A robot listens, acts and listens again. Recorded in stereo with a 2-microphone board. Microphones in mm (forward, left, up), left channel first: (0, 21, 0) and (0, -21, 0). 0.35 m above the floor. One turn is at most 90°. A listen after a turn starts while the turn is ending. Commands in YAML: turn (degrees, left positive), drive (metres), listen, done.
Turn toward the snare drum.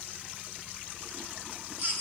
listen: true
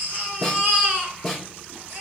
turn: 30
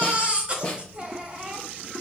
turn: 90
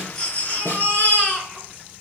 turn: 65
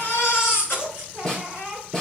turn: 20
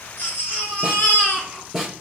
done: "Found it: a snare drum, straight ahead."